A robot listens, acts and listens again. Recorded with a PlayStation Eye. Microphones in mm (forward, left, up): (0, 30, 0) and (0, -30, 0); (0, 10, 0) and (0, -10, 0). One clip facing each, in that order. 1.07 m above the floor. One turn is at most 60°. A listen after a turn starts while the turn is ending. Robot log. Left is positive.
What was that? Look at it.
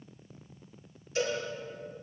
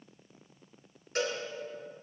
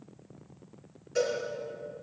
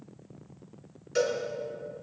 note: The cowbell: about 65° right or 115° right.
cmd yaw -60
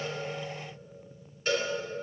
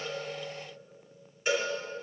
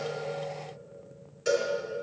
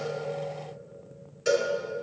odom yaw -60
note: So it is at 10° right.
cmd yaw -10
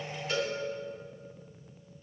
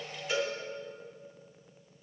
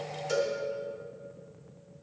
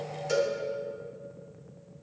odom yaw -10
end: Found it: a cowbell, straight ahead, 2 to 4 m away.